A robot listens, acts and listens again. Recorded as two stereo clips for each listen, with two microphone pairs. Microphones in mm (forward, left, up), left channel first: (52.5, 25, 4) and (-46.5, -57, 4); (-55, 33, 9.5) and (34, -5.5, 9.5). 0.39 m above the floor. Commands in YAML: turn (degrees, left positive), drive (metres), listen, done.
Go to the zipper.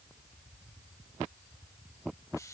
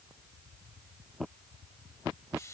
listen: true
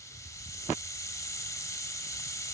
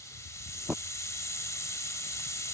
listen: true
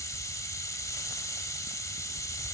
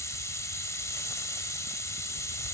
done: "I can't make out a zipper, only a hiss."